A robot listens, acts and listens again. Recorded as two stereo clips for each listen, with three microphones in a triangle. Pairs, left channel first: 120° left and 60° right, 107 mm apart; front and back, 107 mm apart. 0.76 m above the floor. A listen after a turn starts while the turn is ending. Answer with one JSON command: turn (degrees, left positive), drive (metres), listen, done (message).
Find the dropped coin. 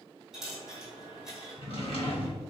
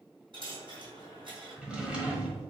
{"turn": -145}
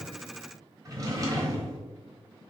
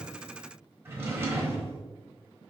{"done": "I heard a dropped coin from this way, but can't make it out now."}